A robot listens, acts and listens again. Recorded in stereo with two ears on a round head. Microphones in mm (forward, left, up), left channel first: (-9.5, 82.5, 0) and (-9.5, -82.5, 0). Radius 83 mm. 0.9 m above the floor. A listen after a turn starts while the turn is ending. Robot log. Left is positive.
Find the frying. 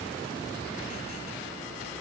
cmd idle
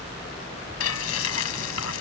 cmd yaw +90
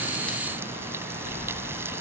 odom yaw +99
note: So it is at 15° right.
cmd yaw -15
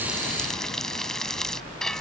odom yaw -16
end: Facing the frying.